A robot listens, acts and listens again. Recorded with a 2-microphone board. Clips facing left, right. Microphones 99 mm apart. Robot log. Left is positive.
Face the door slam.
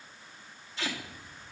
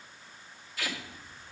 cmd idle
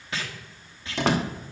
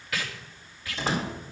note: The door slam: about 70° left or 110° left.
cmd yaw +70
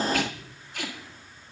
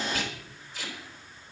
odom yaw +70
cmd idle
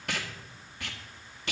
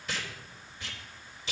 end: I heard a door slam, but can't make it out now. It was about straight ahead or 40° left.